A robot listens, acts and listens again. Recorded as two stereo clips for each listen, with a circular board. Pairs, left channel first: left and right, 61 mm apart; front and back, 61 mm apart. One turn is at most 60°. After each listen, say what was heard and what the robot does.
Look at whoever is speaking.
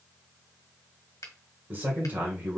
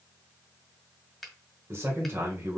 The man speaking: 140° right. Turn 60° right.
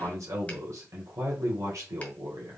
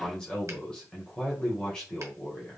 The man speaking is now 75° right. Turn 60° right.
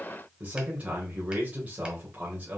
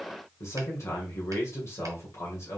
The man speaking is now 30° right. Turn 30° right.
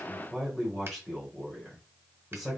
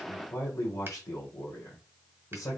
Facing the man speaking.